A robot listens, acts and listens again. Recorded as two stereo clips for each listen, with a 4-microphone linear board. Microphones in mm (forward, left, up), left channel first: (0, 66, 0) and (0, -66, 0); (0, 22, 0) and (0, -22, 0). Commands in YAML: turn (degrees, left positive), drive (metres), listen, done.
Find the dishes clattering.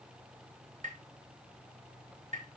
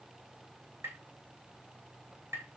listen: true
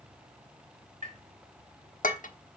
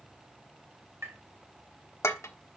turn: 90
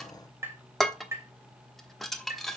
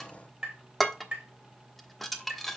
done: "Facing the dishes clattering, 1 to 2 m away."